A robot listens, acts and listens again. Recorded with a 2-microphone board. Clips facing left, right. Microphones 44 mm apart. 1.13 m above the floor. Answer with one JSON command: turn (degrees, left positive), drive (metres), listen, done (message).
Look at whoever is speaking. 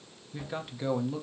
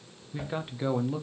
{"turn": -15}
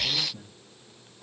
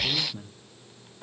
{"turn": -150}
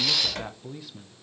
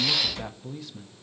{"turn": 10}
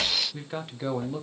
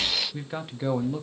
{"done": "Found it: a man speaking, straight ahead."}